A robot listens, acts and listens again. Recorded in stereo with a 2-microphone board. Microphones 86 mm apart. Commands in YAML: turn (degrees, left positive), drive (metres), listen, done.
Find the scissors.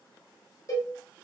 listen: true
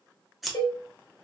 turn: 30
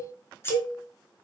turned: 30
turn: 150
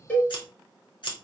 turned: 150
turn: 70
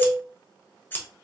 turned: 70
turn: 25
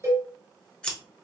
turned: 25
turn: 15
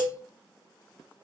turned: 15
listen: true
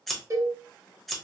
done: "Found it: scissors, straight ahead, under 1 m away."